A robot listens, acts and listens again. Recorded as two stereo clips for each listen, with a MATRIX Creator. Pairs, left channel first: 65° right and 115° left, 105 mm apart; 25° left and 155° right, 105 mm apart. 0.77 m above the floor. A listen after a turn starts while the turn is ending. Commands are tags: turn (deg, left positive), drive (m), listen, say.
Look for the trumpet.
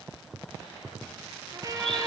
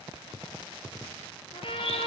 <turn deg="55"/>
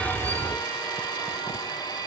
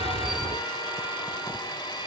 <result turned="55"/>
<listen/>
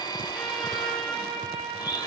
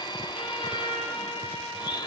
<turn deg="20"/>
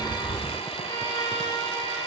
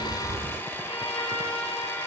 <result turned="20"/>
<turn deg="-10"/>
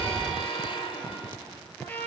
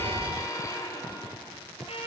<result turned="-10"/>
<say>Facing the trumpet.</say>